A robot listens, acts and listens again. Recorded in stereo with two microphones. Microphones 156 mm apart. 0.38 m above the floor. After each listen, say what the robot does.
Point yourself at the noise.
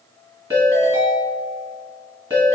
Turn 25° right.
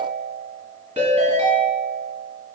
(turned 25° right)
Turn 130° right.
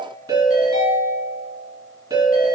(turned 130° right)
Turn 25° right.
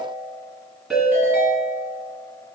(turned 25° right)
Found it: a ringtone, straight ahead, 1 to 2 m away.